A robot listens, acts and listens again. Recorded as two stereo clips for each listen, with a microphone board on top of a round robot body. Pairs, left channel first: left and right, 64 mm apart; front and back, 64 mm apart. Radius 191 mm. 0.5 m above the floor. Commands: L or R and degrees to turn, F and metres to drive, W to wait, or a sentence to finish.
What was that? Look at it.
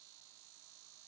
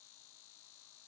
W
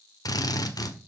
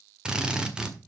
L105
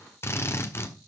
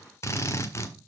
L45
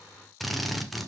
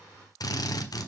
Found it: a drill, straight ahead, 1 to 2 m away.